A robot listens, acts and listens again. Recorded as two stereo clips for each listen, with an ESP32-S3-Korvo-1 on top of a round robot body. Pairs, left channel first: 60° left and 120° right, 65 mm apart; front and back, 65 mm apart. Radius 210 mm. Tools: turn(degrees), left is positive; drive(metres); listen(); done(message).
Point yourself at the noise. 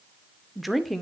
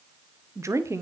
turn(degrees=150)
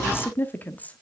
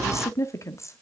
done("Facing the woman speaking.")